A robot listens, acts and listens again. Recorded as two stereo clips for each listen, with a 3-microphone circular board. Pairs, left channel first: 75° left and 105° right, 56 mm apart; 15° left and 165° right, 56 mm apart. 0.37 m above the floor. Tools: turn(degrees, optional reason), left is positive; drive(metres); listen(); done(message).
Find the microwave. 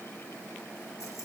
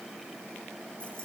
listen()
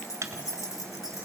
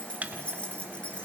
turn(degrees=-110, reason="The microwave: 110° right.")
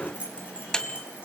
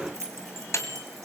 done("Found it: a microwave, straight ahead, 1 to 2 m away.")